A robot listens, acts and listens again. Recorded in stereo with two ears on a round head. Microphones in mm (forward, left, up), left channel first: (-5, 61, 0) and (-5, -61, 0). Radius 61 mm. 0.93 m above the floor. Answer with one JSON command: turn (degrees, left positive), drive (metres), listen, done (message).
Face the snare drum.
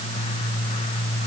{"listen": true}
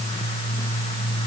{"listen": true}
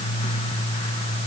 {"done": "I can't make out a snare drum to turn to."}